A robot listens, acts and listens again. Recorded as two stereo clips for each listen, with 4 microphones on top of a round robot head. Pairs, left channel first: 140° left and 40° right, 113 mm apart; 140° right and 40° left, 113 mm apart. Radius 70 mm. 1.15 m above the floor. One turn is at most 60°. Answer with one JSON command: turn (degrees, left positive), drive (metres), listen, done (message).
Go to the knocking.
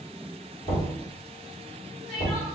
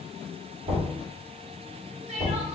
{"turn": 60}
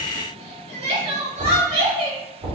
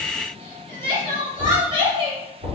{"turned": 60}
{"turn": 30}
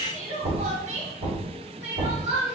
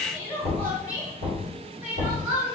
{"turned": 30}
{"drive": 1.0}
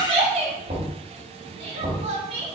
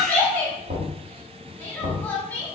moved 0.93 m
{"drive": 1.0}
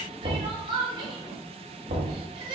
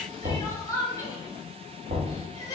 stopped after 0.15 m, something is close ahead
{"turn": -10}
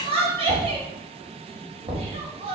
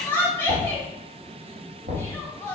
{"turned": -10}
{"done": "Arrived at the knocking, straight ahead."}